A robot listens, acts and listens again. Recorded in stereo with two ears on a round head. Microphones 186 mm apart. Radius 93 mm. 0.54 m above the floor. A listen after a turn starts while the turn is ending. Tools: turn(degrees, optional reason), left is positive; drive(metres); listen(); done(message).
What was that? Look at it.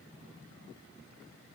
listen()
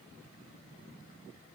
listen()
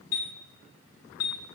turn(degrees=40, reason="The chime: about 40° left or 140° left.")
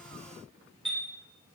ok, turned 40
done("Facing the chime, 2 to 4 m away.")